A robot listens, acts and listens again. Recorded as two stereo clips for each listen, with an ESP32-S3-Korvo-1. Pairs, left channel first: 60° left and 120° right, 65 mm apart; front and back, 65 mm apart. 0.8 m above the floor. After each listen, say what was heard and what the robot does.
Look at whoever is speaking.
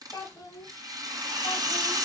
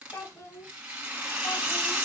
The child speaking: 35° left. Turn 35° left.
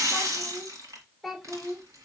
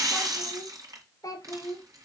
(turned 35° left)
The child speaking is now 35° right. Turn 35° right.
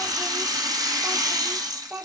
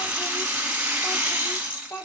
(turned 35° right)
The child speaking is now 45° right. Turn 45° right.
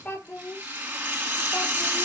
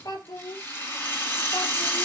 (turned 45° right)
Facing the child speaking.